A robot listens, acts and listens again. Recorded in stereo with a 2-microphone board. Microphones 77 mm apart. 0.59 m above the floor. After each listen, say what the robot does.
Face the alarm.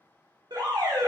Turn 65° right.
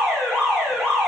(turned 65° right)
Facing the alarm, under 1 m away.